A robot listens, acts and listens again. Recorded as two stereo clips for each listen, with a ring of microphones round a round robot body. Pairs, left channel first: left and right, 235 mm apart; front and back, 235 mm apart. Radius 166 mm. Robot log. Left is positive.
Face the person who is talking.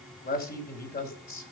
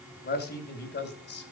note: The man speaking: 40° left.
cmd yaw +40
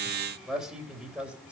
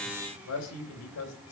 end: Found it: a man speaking, straight ahead, 2 to 4 m away.